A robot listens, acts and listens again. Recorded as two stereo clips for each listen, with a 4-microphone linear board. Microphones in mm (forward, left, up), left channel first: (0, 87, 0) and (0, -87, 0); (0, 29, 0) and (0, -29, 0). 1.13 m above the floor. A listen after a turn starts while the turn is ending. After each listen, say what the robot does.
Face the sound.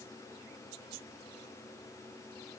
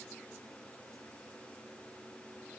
Keep listening.
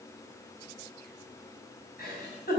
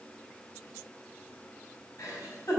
Turn 60° left.
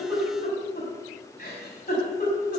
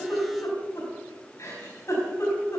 Turn 60° left.
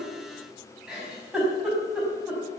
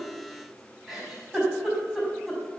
Facing the giggle, over 4 m away.